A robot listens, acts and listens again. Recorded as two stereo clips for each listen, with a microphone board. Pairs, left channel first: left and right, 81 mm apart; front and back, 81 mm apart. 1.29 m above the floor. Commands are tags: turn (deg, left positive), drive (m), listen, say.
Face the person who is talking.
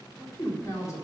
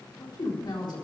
<turn deg="35"/>
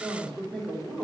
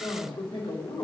<turn deg="10"/>
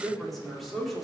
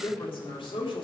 <say>Facing the woman speaking, 2 to 4 m away.</say>